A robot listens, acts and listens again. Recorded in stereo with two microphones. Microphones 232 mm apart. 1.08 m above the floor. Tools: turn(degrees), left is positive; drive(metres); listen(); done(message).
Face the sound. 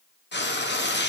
turn(degrees=50)
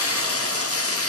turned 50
turn(degrees=80)
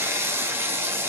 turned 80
turn(degrees=-10)
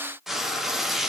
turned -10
done("Found it: frying, straight ahead, 1 to 2 m away.")